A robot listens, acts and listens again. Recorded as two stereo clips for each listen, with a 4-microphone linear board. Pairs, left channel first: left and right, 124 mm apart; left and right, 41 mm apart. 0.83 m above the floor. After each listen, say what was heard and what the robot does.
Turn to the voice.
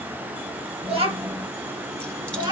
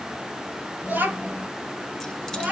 The child speaking: about 35° right or 145° right. Turn 35° right.
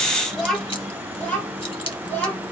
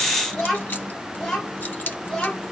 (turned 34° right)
So it is at 15° left. Turn 15° left.
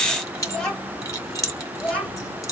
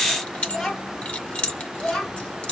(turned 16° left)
The child speaking is now 10° left. Turn 10° left.
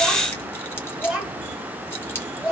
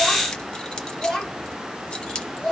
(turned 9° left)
Found it: a child speaking, straight ahead, 2 to 4 m away.